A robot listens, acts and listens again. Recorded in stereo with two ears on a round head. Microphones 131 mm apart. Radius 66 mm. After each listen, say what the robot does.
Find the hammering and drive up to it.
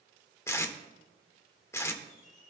Keep listening.
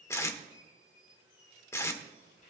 Keep listening.
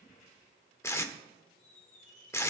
I can't make out hammering, only a squeak and tape being pulled.